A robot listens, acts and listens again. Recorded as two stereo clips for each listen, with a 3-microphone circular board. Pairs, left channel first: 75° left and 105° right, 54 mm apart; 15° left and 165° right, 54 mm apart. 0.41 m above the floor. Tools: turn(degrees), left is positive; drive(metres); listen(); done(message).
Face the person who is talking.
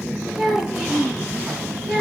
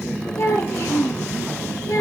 turn(degrees=-20)
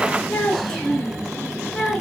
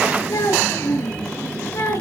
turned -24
done("Facing the child speaking, over 4 m away.")